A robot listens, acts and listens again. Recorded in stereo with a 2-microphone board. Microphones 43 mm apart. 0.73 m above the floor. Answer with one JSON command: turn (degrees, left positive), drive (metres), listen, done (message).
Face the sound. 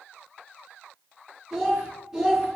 {"turn": -30}
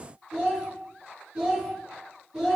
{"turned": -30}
{"turn": -30}
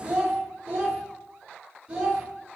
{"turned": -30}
{"turn": -155}
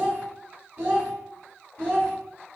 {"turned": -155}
{"turn": -60}
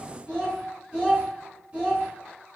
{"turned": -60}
{"turn": -30}
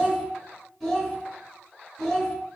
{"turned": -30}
{"done": "Found it: a child speaking, straight ahead."}